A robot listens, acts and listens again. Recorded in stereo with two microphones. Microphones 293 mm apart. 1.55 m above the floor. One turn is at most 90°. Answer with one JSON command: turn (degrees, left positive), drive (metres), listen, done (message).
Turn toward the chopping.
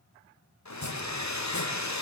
{"turn": 70}
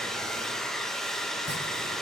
{"listen": true}
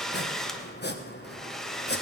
{"turn": 35}
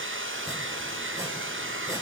{"listen": true}
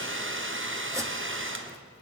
{"listen": true}
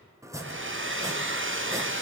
{"turn": -10}
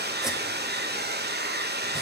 {"listen": true}
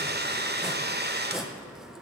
{"done": "Found it: chopping, straight ahead."}